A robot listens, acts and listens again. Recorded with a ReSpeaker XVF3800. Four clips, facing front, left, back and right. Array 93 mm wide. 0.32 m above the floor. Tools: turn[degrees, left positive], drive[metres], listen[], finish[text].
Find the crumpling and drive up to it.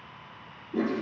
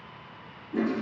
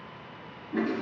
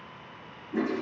Action: listen[]
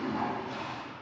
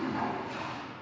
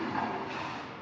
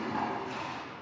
Action: listen[]
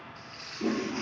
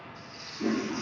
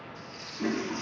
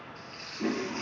Thought: The crumpling: 50° right.
Action: turn[-50]
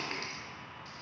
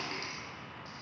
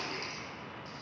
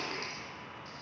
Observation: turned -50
Action: drive[1.0]
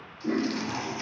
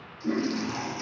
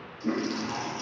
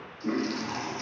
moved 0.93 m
Action: listen[]
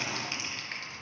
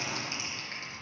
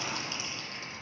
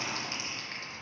Action: drive[1.0]
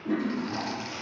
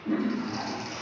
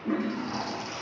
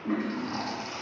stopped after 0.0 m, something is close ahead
Action: listen[]
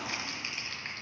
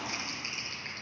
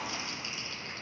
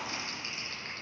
Action: finish[I am next to the crumpling.]